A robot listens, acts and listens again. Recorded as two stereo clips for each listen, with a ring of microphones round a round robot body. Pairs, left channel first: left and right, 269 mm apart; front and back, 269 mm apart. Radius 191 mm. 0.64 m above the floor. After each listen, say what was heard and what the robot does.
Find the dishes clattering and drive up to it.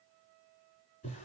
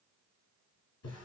Keep listening.
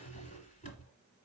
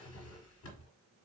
Keep listening.
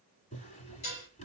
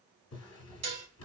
The dishes clattering: 155° left. Turn 155° left.
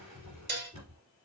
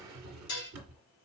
The dishes clattering is now 40° right. Turn 40° right.
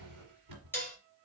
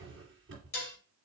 Drive 1.0 m forward.
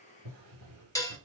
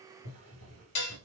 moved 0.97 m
The dishes clattering is now 10° left. Turn 10° left.
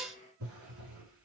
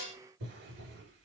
Drive 1.0 m forward.
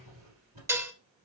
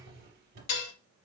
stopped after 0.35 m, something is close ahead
The dishes clattering is now 10° right. Turn 10° right.
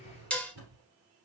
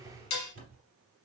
Arrived at the dishes clattering, straight ahead.